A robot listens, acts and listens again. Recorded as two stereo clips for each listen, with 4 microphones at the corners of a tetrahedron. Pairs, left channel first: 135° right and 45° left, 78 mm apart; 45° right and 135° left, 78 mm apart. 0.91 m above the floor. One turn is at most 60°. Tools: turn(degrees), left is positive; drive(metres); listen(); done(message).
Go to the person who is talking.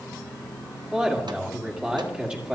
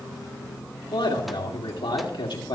turn(degrees=-30)
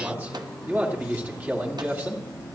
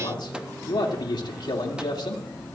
turn(degrees=-20)
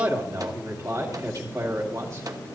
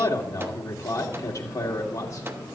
drive(metres=1.0)
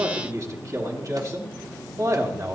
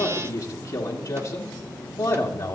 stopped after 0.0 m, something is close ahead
done("Blocked. The man speaking is further on, straight ahead.")